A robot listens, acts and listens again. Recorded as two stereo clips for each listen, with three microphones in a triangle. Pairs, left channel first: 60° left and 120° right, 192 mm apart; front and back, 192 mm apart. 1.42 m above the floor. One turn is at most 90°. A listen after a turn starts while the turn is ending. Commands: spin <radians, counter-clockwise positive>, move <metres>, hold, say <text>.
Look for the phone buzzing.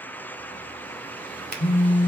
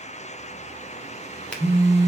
spin 1.57
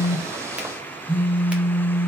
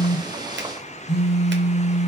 spin -0.26
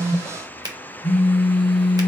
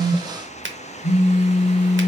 say Found it: a phone buzzing, straight ahead.